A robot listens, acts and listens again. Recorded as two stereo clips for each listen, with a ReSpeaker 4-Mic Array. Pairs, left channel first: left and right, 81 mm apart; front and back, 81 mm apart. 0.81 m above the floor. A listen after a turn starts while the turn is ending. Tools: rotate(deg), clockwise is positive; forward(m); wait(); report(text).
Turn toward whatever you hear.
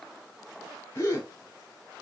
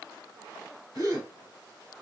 rotate(-145)
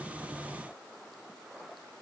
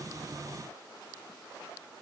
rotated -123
rotate(-25)
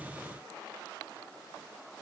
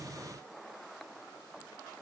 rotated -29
report("Facing where the gasp came from. I can't hear it now.")